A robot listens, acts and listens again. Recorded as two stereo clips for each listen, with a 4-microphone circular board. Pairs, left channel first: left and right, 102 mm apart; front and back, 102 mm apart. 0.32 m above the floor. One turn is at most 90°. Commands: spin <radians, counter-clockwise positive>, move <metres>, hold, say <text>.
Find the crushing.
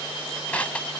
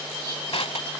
spin 0.26
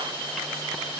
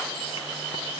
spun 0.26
hold
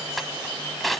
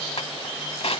say Facing the crushing.